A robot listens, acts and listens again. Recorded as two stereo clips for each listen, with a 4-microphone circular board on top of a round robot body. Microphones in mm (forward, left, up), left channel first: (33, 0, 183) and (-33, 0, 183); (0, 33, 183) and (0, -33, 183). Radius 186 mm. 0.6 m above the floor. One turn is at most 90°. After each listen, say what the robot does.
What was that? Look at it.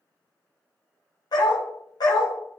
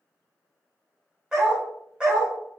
Turn 10° right.
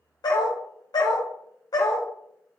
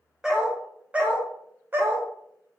Turn 35° right.
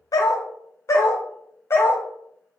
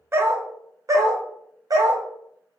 Turn 55° right.
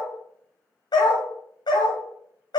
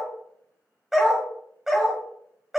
Facing the dog barking, 1 to 2 m away.